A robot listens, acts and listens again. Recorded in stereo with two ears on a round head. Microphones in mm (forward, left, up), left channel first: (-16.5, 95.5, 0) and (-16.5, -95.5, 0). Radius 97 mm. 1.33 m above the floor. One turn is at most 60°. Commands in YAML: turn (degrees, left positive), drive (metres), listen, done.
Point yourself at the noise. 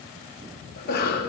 turn: 50
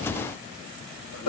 turn: 60
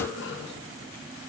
turn: 55
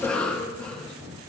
done: "Facing the cough, 1 to 2 m away."